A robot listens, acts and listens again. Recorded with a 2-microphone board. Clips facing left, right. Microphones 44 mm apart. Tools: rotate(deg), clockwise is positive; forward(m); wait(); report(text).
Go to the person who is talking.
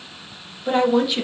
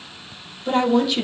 rotate(-30)
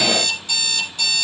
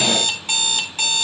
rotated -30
wait()
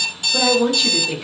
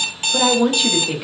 rotate(15)
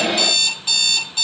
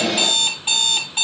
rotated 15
wait()
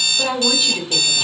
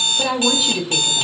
forward(1.0)
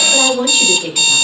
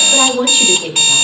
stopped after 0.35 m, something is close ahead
rotate(10)
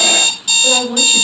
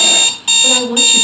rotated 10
report("Blocked. The woman speaking is further on, straight ahead.")